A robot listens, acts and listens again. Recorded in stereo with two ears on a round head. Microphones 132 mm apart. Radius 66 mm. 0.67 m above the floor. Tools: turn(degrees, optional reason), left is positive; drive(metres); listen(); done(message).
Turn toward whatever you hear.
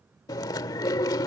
turn(degrees=25, reason="The chewing: about 25° left or 155° left.")
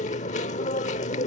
turn(degrees=130, reason="So it is at 130° left.")
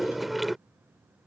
done("Facing the chewing.")